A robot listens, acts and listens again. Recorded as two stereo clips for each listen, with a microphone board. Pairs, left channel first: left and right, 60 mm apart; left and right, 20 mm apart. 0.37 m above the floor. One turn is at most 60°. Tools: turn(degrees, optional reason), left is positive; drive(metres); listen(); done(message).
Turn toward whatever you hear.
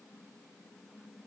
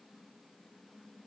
listen()
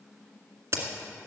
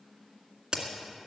turn(degrees=-50, reason="The crack: about 50° right or 130° right.")
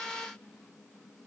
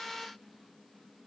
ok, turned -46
listen()
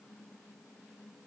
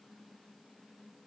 done("I heard a crack, but can't make it out now. It was about straight ahead or 85° right.")